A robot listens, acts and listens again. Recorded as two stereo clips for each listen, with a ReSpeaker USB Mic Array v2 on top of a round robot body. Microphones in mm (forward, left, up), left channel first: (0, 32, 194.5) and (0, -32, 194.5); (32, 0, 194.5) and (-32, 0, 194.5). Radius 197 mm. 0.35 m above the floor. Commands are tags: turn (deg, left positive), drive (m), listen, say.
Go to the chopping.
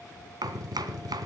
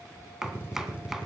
<turn deg="-95"/>
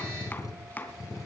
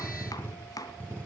<turn deg="25"/>
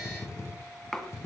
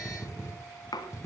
<drive m="1.0"/>
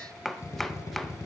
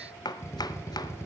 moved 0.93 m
<drive m="1.0"/>
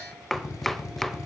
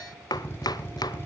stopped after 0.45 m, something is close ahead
<say>Arrived at the chopping, straight ahead.</say>